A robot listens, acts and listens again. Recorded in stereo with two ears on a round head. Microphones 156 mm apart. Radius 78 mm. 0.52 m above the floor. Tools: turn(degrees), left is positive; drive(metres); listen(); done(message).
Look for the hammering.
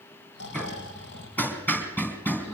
turn(degrees=30)
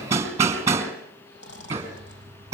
turn(degrees=-15)
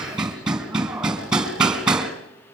done("Facing the hammering, 2 to 4 m away.")